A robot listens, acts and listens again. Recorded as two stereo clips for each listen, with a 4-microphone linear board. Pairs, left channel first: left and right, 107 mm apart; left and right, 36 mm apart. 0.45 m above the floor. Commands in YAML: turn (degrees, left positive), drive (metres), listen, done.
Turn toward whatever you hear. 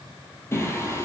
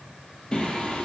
turn: 30
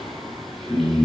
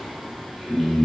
done: "Facing the singing, 2 to 4 m away."